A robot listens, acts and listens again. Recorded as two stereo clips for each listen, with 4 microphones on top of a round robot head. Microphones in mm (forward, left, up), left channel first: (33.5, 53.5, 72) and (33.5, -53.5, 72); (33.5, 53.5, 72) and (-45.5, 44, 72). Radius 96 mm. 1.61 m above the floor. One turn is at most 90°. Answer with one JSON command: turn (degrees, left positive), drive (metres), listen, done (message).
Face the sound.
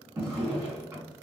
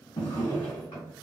{"turn": -35}
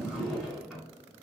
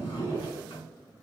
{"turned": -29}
{"done": "Found it: a drawer, straight ahead."}